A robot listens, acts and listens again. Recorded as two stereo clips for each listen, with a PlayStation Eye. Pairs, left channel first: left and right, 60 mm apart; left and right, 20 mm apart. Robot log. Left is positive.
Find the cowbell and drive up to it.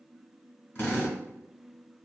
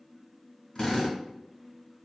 cmd idle
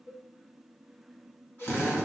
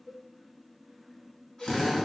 note: The cowbell: about 75° left or 105° left.
cmd yaw +75
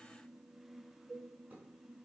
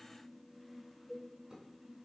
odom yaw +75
cmd fwd 1.0
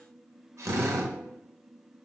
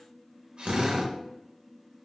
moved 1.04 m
cmd idle
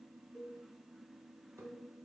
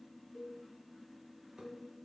cmd fwd 1.0
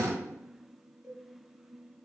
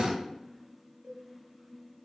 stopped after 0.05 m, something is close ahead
note: The cowbell is now 10° right.
cmd yaw -10
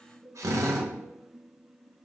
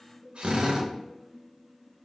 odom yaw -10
end: Arrived at the cowbell, straight ahead.